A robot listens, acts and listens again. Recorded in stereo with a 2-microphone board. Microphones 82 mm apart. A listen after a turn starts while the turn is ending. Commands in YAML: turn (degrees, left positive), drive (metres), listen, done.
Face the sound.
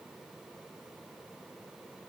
listen: true
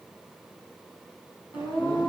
turn: 70
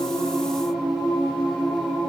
done: "Facing the singing."